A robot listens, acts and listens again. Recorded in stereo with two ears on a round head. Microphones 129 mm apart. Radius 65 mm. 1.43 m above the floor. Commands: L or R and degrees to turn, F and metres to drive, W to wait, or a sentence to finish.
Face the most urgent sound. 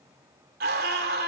R70
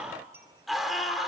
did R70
Facing the scream, 2 to 4 m away.